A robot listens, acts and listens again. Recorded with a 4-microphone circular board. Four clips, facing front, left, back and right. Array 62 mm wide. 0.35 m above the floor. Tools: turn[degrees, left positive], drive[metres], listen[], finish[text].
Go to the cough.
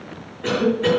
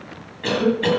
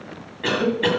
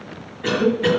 Thought: The cough: 155° left.
Action: turn[155]
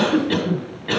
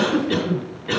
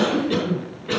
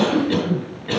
Action: drive[1.0]
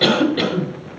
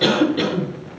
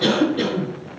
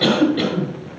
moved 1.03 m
Action: drive[1.0]
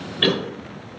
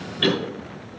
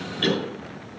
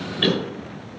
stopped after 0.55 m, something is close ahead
Action: finish[Arrived at the cough, straight ahead.]